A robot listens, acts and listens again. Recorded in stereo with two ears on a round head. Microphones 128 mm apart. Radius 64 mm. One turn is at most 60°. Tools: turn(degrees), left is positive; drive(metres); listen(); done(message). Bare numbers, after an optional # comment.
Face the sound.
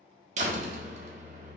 # The door slam: about 50° right or 130° right.
turn(-50)
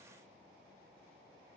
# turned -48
listen()
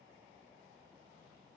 done("I heard a door slam, but can't make it out now. It was about straight ahead or 85° right.")